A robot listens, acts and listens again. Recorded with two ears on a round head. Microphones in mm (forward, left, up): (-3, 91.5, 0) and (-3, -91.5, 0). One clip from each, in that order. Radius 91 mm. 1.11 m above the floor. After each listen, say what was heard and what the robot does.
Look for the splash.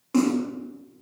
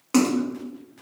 The splash: about 55° right or 125° right. Turn 55° right.
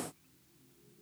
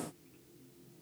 Keep listening.
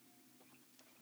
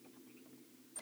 I heard a splash, but can't make it out now. It was about straight ahead or 70° right.